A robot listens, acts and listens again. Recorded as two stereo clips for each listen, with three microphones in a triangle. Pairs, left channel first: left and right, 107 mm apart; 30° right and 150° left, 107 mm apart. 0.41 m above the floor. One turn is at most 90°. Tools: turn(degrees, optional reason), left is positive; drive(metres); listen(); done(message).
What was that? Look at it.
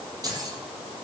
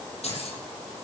turn(degrees=-35, reason="The keys jangling: 35° right.")
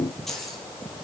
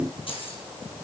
done("Found it: keys jangling, straight ahead, over 4 m away.")